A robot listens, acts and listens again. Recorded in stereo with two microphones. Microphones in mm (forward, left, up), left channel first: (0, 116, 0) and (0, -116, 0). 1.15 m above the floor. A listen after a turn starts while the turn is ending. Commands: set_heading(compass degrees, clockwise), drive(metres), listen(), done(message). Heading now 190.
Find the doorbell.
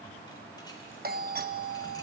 set_heading(230)
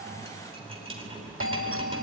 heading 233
set_heading(323)
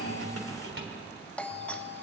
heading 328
done("Facing the doorbell, 1 to 2 m away.")